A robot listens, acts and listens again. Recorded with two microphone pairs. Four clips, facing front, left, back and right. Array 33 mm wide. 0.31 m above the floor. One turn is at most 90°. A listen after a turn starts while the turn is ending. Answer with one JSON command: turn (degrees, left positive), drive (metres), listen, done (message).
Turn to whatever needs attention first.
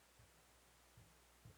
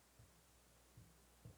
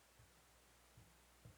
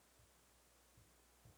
{"listen": true}
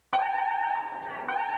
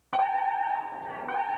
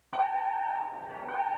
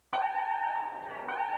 {"done": "Facing the fire alarm."}